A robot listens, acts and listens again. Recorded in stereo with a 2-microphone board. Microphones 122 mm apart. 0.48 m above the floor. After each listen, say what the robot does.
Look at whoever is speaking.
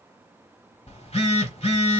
Keep listening.
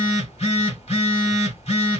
Keep listening.
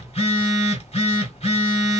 I can't make out anyone speaking to turn to.